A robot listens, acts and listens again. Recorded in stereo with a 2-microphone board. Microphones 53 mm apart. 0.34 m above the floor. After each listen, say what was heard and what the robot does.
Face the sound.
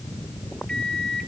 Turn 30° left.
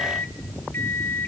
So it is at 135° left. Turn 135° left.
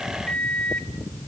The microwave is now 25° left. Turn 25° left.
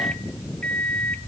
The microwave is now 25° left. Turn 25° left.
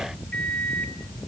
The microwave is now 25° left. Turn 25° left.
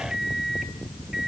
The microwave is now 10° right. Turn 10° right.
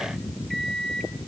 Found it: a microwave, straight ahead.